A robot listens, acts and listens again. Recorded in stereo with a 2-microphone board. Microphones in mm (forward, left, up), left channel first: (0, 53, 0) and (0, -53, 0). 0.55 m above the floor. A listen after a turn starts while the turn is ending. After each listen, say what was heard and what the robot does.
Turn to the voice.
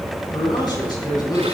The man speaking: about 40° left or 140° left. Turn 40° left.
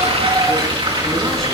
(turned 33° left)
Keep listening.
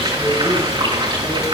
Keep listening.
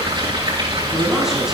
Facing the man speaking.